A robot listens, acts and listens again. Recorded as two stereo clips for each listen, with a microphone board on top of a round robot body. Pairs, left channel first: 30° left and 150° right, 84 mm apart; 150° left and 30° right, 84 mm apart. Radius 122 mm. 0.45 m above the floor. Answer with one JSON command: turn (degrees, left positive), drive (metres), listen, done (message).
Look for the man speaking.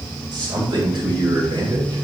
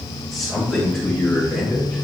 {"turn": -130}
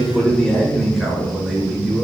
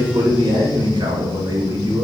{"turn": -65}
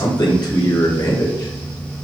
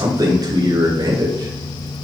{"done": "Found it: a man speaking, straight ahead."}